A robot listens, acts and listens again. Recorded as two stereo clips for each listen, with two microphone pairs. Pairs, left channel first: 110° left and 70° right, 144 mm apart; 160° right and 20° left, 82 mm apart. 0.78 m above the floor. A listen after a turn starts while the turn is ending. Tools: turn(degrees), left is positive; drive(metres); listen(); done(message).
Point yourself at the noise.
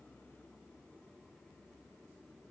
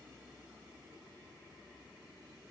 listen()
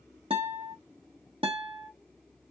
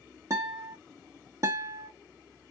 turn(degrees=-25)
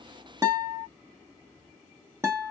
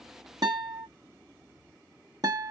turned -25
done("Facing the guitar, 1 to 2 m away.")